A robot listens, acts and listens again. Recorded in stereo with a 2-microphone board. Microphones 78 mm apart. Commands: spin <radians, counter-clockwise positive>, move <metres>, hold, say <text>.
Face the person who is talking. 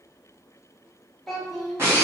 spin 0.52
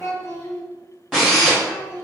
spin 2.53
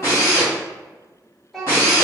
say Facing the child speaking.